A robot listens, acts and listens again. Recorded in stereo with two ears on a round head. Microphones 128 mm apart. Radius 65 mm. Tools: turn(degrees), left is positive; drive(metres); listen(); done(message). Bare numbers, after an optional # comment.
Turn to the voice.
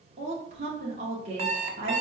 # The woman speaking: about 45° right or 135° right.
turn(-45)
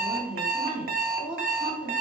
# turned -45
# So it is at 10° right.
turn(-10)
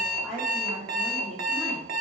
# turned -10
done("Found it: a woman speaking, straight ahead, 1 to 2 m away.")